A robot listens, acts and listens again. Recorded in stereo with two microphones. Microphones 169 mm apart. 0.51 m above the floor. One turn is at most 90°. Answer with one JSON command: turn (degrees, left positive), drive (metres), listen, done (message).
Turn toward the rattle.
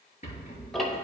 {"turn": 45}
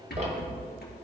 {"turn": 90}
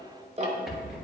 {"done": "Found it: a rattle, straight ahead, 2 to 4 m away."}